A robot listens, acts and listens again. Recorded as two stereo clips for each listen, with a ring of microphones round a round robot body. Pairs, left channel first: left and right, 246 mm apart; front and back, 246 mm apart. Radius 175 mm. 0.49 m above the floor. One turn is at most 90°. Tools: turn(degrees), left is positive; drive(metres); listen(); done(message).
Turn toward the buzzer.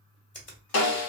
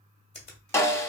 listen()
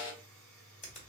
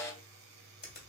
turn(degrees=90)
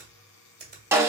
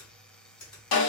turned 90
turn(degrees=85)
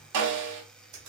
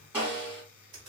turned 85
done("Found it: a buzzer, straight ahead, under 1 m away.")